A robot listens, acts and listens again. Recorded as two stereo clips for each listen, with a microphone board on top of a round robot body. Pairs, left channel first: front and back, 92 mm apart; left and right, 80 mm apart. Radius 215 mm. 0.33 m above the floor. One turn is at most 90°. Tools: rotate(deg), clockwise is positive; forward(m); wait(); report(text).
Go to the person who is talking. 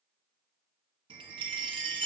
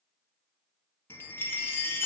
wait()
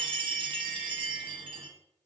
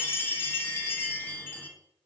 wait()
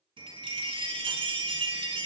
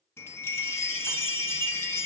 report("I can't make out anyone speaking to turn to.")